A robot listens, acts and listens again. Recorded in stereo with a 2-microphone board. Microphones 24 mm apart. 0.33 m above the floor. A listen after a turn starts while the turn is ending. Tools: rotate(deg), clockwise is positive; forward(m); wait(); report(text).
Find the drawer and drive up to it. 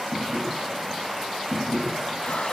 rotate(-30)
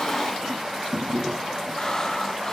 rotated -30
rotate(30)
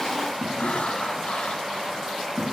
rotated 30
forward(1.0)
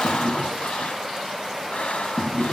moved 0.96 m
forward(1.0)
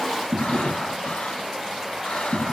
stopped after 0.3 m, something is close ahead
rotate(10)
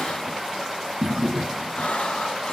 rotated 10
report("I am next to the drawer.")